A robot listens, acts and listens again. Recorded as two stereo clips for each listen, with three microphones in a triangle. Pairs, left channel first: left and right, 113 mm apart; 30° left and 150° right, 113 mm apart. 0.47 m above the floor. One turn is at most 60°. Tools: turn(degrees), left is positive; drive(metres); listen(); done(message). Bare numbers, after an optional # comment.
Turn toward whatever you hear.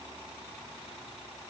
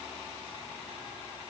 listen()
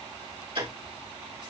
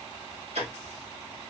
# The ticking: 130° right.
turn(-60)
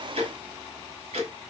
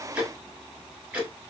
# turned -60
# The ticking is now 70° right.
turn(-60)
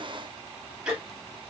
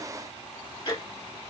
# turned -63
# The ticking is now 10° right.
turn(-10)
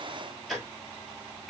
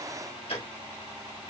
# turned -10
done("Found it: ticking, straight ahead, 2 to 4 m away.")